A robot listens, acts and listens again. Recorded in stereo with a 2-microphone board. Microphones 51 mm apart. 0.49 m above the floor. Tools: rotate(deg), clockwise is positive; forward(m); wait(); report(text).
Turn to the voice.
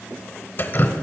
wait()
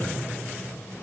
wait()
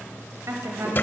rotate(65)
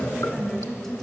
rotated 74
report("Found it: a woman speaking, straight ahead, 2 to 4 m away.")